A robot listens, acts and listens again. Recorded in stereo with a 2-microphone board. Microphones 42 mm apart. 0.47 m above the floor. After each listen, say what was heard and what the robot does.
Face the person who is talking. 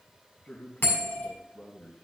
The man speaking: about 25° left or 155° left. Turn 25° left.
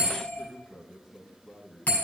Facing the man speaking, 2 to 4 m away.